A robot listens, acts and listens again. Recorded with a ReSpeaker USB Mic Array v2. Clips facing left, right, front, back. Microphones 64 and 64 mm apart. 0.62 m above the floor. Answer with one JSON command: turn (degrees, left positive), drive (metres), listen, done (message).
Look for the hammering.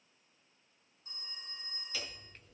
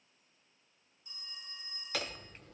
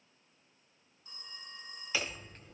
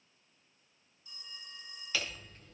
{"turn": -70}
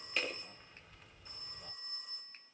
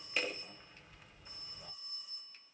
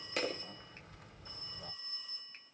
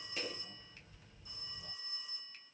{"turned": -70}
{"done": "Found it: hammering, straight ahead."}